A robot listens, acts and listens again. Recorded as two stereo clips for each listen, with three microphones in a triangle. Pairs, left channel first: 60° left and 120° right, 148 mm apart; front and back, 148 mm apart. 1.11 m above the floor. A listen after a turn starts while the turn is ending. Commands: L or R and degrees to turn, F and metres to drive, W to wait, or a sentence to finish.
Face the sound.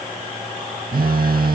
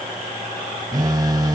R115
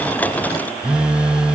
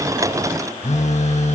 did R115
R40
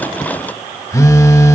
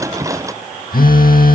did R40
R10
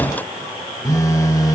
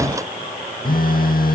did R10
Found it: a phone buzzing, straight ahead.